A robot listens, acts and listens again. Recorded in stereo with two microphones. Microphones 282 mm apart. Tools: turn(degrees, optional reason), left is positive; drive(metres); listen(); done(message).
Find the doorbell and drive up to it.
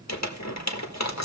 listen()
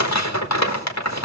listen()
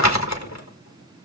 done("I can't make out a doorbell, only crumpling.")